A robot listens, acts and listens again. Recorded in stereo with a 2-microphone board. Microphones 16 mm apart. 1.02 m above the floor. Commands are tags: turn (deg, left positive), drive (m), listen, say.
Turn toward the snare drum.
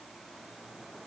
<listen/>
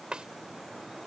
<turn deg="-90"/>
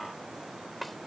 <say>Found it: a snare drum, straight ahead.</say>